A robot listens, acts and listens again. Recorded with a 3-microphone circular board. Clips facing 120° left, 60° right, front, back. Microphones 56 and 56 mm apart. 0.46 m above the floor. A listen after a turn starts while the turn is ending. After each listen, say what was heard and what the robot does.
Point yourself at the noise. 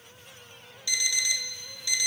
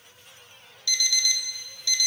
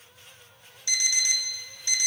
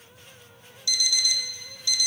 The alarm clock: 50° left. Turn 50° left.
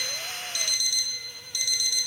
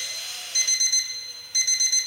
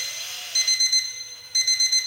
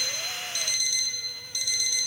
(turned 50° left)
The alarm clock is now 20° right. Turn 20° right.
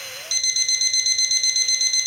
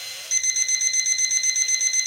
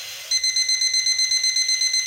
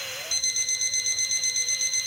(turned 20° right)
Facing the alarm clock.